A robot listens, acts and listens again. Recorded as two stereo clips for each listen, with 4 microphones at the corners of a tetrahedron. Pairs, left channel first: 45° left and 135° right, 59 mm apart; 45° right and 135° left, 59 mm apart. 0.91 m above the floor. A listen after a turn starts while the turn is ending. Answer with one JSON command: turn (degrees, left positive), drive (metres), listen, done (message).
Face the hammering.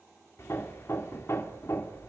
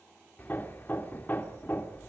{"turn": 10}
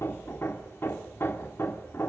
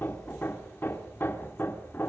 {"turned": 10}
{"done": "Facing the hammering, 2 to 4 m away."}